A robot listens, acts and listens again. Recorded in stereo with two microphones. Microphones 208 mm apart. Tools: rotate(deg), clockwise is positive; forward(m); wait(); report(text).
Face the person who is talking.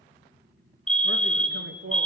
rotate(65)
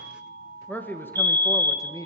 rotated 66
rotate(-15)
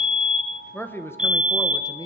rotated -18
rotate(-20)
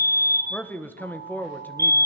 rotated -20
rotate(-10)
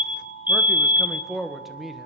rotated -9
report("Facing the man speaking, 1 to 2 m away.")